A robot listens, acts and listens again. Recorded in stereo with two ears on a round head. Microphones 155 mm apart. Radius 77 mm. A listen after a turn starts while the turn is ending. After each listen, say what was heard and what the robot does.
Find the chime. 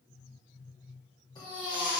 Keep listening.
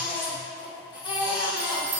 The chime: about 30° right or 150° right. Turn 30° right.
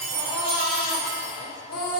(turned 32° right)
Keep listening.
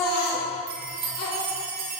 So it is at 110° right. Turn 110° right.
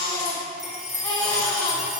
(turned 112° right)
Facing the chime, under 1 m away.